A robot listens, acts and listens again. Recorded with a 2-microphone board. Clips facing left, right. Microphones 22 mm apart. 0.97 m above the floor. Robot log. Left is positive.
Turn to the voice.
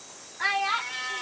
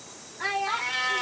note: The child speaking: about 20° left or 160° left.
cmd yaw +20
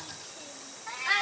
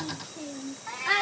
end: Found it: a child speaking, straight ahead.